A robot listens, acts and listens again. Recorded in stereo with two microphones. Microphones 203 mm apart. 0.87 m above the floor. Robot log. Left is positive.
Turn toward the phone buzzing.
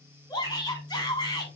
note: The phone buzzing: about 35° right or 145° right.
cmd yaw -35
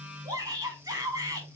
note: So it is at 105° right.
cmd yaw -105
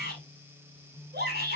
end: Facing the phone buzzing.